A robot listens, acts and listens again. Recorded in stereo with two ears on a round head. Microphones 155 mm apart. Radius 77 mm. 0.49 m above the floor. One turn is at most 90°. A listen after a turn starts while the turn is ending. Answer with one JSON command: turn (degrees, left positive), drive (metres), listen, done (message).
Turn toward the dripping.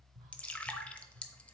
{"turn": 30}
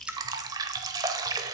{"turn": -20}
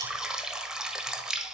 {"done": "Found it: dripping, straight ahead, under 1 m away."}